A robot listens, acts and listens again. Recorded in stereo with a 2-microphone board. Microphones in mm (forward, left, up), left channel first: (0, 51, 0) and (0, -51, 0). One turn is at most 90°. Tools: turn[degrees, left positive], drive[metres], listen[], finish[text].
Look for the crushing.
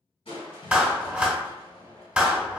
Thought: The crushing: about 70° left or 110° left.
Action: turn[70]
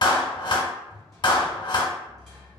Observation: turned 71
Action: finish[Found it: crushing, straight ahead.]